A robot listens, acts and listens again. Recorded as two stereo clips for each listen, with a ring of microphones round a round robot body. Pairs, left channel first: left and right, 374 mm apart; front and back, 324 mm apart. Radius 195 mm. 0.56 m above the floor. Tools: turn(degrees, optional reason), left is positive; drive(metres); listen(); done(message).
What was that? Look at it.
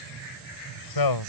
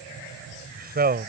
turn(degrees=120, reason="The man speaking: 120° left.")
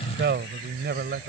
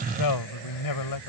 turn(degrees=-25, reason="The man speaking is now 25° right.")
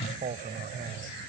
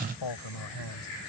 turn(degrees=-20, reason="The man speaking is now 20° right.")
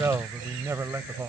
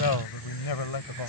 done("Found it: a man speaking, straight ahead.")